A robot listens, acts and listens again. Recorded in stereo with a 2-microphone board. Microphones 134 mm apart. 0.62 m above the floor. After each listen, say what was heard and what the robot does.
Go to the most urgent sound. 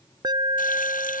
The alarm: about 30° right or 150° right. Turn 30° right.
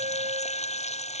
So it is at 120° right. Turn 120° right.
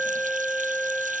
Drive 1.0 m forward.
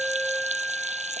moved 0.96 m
Drive 1.0 m forward.
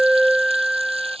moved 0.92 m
Drive 1.0 m forward.
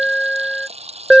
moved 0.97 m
Drive 1.0 m forward.
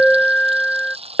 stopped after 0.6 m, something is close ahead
The alarm is now 10° left. Turn 10° left.
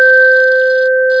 Arrived at the alarm, straight ahead.